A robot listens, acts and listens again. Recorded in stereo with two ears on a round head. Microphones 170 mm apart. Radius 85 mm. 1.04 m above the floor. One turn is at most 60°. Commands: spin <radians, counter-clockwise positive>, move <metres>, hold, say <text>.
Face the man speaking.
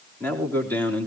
spin 0.52
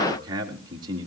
spin -0.44
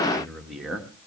say Found it: a man speaking, straight ahead, 2 to 4 m away.